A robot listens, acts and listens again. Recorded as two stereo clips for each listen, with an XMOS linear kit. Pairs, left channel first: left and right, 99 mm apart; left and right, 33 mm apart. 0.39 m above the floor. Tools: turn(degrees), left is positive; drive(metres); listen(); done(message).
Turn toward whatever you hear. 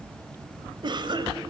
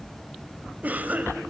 turn(degrees=-50)
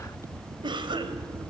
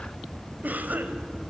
turn(degrees=-65)
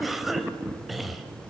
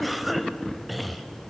done("Facing the cough, 1 to 2 m away.")